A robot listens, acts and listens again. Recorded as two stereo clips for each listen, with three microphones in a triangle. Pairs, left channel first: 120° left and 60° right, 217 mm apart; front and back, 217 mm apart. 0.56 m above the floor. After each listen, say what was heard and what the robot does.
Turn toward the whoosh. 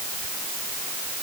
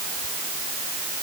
Keep listening.
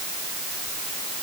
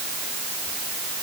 Keep listening.
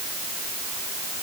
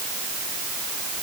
I can't make out a whoosh to turn to.